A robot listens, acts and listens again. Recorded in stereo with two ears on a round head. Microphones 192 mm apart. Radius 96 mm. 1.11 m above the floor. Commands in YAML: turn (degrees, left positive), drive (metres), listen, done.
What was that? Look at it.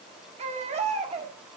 turn: -30
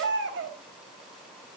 turn: -115
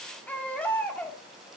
done: "Facing the baby crying, 1 to 2 m away."